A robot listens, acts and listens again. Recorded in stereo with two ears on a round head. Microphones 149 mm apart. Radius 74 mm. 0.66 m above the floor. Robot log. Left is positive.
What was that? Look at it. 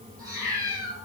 note: The cat meowing: about 25° right or 155° right.
cmd yaw -25
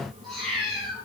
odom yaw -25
end: Facing the cat meowing, over 4 m away.